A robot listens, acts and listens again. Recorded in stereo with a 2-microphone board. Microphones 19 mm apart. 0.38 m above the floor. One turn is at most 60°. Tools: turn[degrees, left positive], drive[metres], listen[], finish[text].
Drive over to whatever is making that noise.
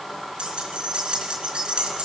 Thought: The keys jangling: about 75° right or 105° right.
Action: turn[-60]
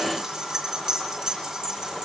Thought: So it is at 45° right.
Action: turn[-45]
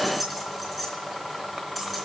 Action: drive[1.0]
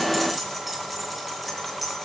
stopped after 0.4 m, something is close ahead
Action: finish[Something is in my way. I am facing the keys jangling but have not reached it.]